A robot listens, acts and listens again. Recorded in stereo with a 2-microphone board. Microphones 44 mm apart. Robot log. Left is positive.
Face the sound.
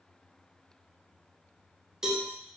cmd yaw -30
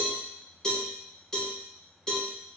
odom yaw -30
note: So it is at 20° left.
cmd yaw +20
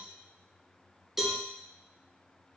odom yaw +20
end: Facing the cowbell.